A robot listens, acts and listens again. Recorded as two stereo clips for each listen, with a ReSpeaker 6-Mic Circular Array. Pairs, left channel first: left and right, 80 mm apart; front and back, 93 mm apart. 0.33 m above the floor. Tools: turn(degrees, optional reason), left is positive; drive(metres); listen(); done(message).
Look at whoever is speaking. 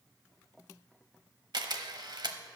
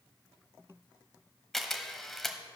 listen()
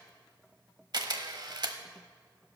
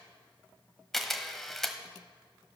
listen()
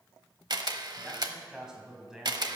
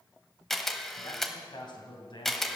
turn(degrees=-10, reason="The man speaking: 10° right.")
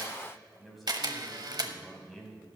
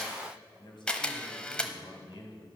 done("Found it: a man speaking, straight ahead, 2 to 4 m away.")